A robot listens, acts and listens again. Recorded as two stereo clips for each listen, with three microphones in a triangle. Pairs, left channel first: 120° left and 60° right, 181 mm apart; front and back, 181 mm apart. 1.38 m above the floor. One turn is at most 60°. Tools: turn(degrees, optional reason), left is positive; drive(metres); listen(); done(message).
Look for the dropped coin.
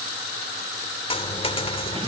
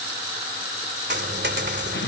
turn(degrees=60, reason="The dropped coin: 175° left.")
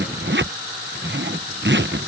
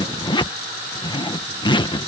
turn(degrees=60, reason="Nothing new. It was at 115° left.")
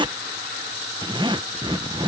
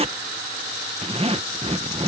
turn(degrees=55, reason="Nothing new. It was at 55° left.")
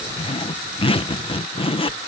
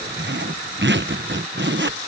done("Facing where the dropped coin came from. I can't hear it now.")